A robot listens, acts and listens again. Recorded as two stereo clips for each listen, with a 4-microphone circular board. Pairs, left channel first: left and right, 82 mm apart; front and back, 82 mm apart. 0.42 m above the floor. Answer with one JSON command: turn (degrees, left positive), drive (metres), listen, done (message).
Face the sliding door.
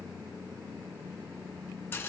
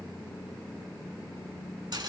{"listen": true}
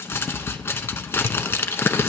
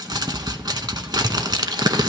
{"listen": true}
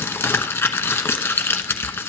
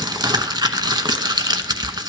{"done": "I can't make out a sliding door, only crumpling."}